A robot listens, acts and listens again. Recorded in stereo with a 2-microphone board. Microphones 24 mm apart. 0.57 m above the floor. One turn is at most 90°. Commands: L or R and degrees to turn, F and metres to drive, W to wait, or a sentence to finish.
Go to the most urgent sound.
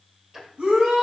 R75
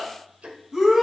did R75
R15
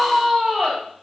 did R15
F1.0
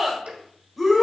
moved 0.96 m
F1.0
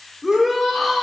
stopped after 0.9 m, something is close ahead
Arrived at the shout, straight ahead.